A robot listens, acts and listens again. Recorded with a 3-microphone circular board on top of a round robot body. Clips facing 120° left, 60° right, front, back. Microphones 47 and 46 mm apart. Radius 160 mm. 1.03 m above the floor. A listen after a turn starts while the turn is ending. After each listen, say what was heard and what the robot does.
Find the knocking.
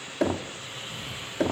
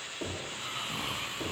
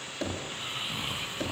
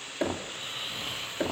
The knocking: 110° left. Turn 110° left.
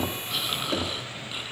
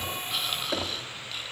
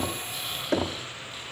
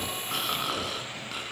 The knocking is now 25° left. Turn 25° left.
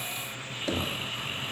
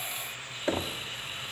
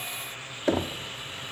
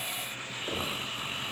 Facing the knocking, 1 to 2 m away.